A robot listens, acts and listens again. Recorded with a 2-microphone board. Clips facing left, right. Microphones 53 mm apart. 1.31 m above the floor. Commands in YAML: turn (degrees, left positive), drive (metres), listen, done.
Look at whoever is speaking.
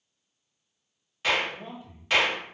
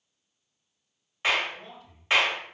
turn: 15
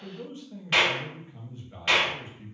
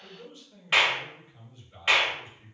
turn: 150
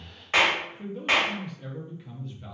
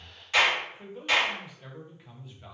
done: "Found it: a man speaking, straight ahead."